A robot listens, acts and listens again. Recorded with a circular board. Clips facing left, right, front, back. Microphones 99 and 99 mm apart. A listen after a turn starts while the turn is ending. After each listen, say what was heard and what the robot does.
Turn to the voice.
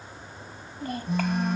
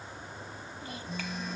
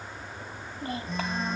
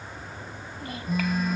The child speaking: 60° left. Turn 60° left.
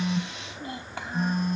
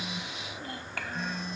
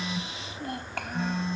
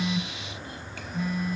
The child speaking is now 20° left. Turn 20° left.
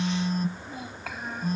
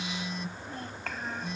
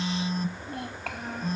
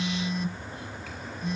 Found it: a child speaking, straight ahead.